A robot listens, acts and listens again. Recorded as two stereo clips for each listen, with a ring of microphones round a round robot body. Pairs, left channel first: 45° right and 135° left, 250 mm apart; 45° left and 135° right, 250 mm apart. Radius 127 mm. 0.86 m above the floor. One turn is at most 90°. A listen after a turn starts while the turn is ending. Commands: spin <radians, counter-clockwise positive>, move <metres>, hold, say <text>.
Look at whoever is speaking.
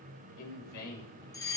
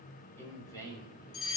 spin -0.52
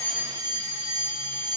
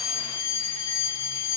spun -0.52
hold
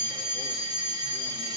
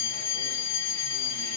hold
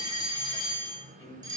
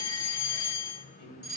spin 0.70
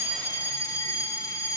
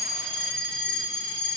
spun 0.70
hold
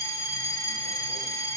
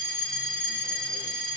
hold
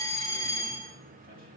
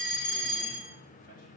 say Facing where the man speaking came from. I can't hear it now.